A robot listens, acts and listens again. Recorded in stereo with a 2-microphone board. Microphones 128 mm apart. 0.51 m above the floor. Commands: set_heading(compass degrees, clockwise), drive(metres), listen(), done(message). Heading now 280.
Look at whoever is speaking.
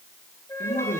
set_heading(190)
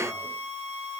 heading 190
listen()
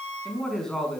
done("Found it: a man speaking, straight ahead.")